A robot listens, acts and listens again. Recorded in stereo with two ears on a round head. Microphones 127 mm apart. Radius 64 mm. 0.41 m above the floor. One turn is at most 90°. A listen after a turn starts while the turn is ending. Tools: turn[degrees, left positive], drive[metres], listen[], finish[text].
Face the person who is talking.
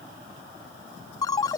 Action: listen[]
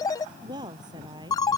Thought: The woman speaking: about 30° right or 150° right.
Action: turn[-30]
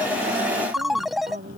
Thought: So it is at 120° right.
Action: turn[-90]
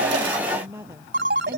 Thought: The woman speaking is now 15° right.
Action: turn[-15]
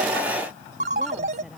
Action: finish[Facing the woman speaking.]